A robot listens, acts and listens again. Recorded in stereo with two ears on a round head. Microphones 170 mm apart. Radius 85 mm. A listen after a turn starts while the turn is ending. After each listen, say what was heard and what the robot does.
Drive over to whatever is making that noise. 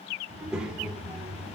Turn 30° right.
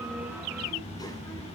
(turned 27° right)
So it is at 20° left. Turn 20° left.
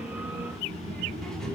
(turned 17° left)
Drive 1.0 m forward.
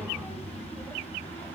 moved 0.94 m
The child speaking is now 10° left. Turn 10° left.
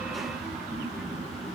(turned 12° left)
Drive 1.0 m forward.
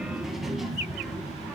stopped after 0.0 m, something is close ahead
Arrived at the child speaking, straight ahead.